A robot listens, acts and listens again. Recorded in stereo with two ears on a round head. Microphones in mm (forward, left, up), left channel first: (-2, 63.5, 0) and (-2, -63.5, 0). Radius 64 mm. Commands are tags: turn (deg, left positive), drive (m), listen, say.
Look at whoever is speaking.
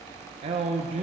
<turn deg="-45"/>
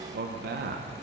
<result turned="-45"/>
<turn deg="-90"/>
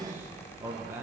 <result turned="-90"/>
<turn deg="-15"/>
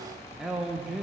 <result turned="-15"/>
<say>Facing the man speaking.</say>